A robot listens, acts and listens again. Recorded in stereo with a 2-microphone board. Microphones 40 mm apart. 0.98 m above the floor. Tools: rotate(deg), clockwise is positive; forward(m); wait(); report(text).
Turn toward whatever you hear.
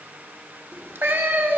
rotate(65)
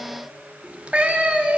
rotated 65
rotate(35)
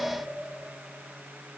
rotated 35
wait()
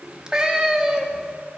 rotate(15)
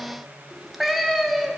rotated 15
report("Facing the cat meowing.")